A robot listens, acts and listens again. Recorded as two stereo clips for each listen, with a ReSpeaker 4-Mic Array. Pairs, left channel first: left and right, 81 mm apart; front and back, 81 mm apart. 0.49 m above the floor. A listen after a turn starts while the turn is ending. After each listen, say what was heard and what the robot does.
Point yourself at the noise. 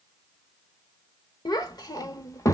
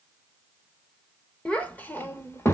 The child speaking: 50° left. Turn 50° left.
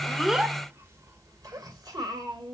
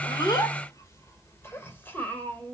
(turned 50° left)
The child speaking is now 70° right. Turn 70° right.
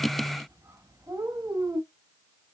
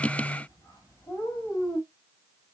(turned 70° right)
The child speaking is now 50° right. Turn 50° right.
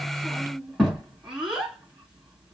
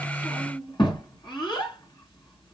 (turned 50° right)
Found it: a child speaking, straight ahead, 2 to 4 m away.